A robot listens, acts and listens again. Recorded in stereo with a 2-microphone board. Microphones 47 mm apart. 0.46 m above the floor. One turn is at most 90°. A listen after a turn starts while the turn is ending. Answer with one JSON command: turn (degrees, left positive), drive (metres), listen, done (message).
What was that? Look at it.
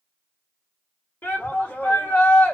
{"turn": 50}
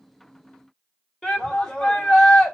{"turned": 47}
{"turn": 15}
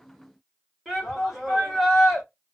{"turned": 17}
{"done": "Facing the shout."}